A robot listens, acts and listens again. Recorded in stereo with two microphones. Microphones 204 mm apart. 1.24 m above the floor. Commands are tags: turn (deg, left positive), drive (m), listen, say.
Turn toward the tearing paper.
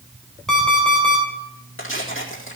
<turn deg="90"/>
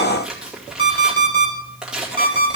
<say>Found it: tearing paper, straight ahead.</say>